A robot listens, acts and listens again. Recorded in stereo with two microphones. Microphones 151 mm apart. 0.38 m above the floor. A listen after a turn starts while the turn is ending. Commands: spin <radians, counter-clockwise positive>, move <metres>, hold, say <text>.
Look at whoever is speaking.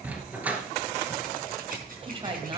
spin -0.52
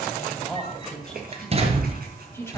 spin 0.26
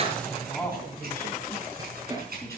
spin 0.17
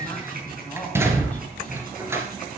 spin 0.17
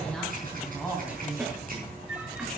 say Found it: a woman speaking, straight ahead.